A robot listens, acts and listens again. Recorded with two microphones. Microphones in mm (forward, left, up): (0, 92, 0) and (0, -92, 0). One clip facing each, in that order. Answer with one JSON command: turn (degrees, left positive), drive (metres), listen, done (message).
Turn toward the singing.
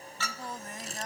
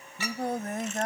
{"turn": -65}
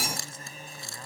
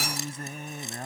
{"turn": -60}
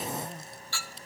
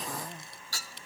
{"done": "Facing the singing."}